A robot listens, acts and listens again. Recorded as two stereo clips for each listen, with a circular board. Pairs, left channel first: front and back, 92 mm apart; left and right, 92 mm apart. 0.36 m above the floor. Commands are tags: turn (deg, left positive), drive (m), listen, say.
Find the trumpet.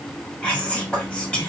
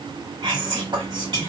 <listen/>
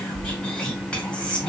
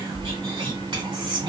<listen/>
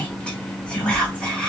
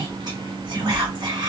<say>I can't make out a trumpet to turn to.</say>